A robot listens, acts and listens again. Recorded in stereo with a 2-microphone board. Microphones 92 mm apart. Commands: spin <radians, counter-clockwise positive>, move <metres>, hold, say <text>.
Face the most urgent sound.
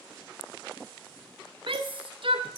spin -1.22
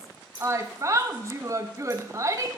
spin -0.61
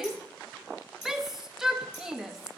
say Facing the shout.